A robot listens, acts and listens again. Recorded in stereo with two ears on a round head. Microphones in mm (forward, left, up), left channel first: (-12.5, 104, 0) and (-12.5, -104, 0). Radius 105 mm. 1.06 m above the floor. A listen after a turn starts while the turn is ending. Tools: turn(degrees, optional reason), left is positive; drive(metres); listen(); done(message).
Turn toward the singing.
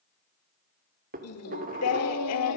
turn(degrees=90)
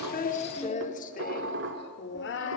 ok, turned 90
turn(degrees=55, reason="So it is at 55° left.")
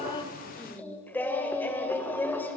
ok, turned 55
turn(degrees=10, reason="The singing is now 10° left.")
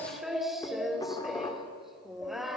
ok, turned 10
done("Facing the singing.")